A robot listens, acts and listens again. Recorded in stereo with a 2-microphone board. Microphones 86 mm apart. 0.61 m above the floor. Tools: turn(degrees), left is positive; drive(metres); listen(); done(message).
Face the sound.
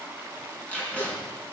turn(degrees=30)
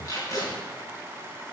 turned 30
turn(degrees=140)
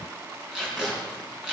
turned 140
turn(degrees=-10)
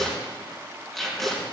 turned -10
done("Found it: tape being pulled, straight ahead.")